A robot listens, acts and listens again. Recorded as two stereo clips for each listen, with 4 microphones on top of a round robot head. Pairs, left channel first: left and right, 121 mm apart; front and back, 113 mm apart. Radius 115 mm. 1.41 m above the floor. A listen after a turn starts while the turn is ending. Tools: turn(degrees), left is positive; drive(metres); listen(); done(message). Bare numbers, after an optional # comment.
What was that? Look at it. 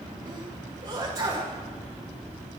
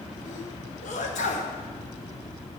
# The sneeze: 20° right.
turn(-20)
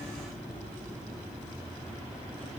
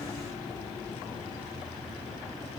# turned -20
done("I heard a sneeze from this way, but can't make it out now.")